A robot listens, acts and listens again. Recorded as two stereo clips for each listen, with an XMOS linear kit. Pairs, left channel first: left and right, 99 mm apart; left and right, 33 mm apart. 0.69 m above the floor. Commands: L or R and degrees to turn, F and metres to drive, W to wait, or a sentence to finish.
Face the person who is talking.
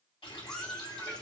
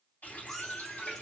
W
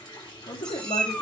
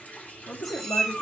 L55
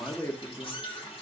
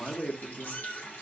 L30
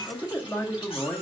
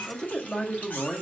L20
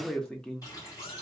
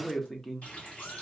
L10
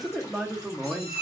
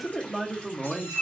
Facing the man speaking, under 1 m away.